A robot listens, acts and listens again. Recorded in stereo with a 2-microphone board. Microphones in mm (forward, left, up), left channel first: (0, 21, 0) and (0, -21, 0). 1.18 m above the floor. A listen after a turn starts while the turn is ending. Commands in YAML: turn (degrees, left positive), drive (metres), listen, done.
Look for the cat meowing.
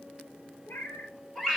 turn: 65
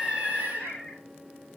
turn: 10
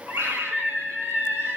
listen: true
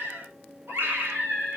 listen: true
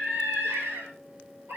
done: "I heard a cat meowing from this way, but can't make it out now."